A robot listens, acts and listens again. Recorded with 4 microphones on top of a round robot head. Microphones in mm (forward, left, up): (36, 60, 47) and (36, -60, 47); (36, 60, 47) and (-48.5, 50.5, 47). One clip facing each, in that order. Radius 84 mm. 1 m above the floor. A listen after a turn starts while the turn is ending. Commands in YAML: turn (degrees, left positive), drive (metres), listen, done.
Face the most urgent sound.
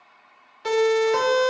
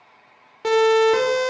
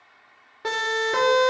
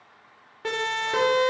turn: -70
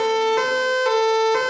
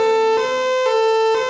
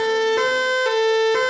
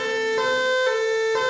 turn: -15
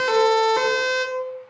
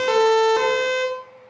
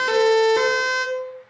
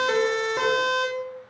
done: "Facing the siren, over 4 m away."